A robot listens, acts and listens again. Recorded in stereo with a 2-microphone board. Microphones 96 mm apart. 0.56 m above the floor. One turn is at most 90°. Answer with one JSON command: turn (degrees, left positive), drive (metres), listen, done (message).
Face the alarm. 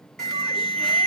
{"turn": 30}
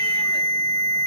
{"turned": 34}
{"turn": -25}
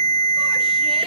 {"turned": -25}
{"done": "Facing the alarm, 2 to 4 m away."}